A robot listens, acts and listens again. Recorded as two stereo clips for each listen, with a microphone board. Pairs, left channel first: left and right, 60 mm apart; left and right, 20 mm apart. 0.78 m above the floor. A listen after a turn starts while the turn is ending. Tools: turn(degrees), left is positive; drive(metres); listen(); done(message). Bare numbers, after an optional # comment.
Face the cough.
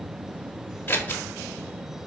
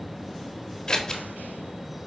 listen()
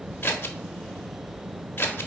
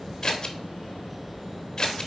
listen()
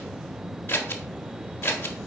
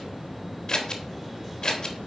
done("I can't make out a cough to turn to.")